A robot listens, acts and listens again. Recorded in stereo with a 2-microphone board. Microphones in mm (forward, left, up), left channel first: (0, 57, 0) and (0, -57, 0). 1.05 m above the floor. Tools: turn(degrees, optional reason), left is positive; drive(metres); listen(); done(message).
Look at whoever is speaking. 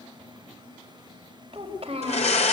turn(degrees=-55, reason="The child speaking: about 55° right or 125° right.")
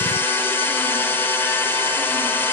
listen()
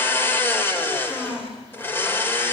done("Facing the child speaking, over 4 m away.")